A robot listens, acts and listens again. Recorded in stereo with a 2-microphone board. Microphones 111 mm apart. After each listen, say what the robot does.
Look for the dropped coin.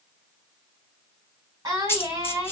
Turn 20° left.
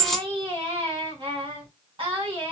Found it: a dropped coin, straight ahead.